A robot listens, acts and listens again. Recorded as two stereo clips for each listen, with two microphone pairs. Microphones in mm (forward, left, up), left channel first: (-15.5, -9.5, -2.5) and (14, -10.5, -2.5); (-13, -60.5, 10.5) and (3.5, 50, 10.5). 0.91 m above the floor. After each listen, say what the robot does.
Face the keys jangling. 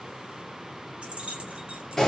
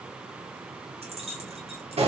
Turn 55° left.
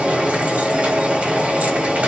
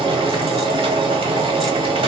Keep listening.
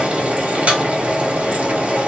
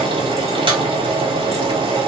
Keep listening.
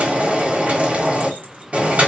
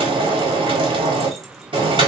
I heard keys jangling from this way, but can't make it out now.